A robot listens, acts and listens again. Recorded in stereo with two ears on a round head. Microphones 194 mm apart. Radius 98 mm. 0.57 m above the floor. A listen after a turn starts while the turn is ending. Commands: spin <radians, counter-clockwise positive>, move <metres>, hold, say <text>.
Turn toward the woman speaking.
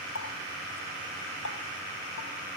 hold
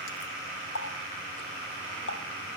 hold
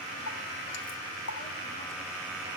say I can't make out a woman speaking, only a running tap.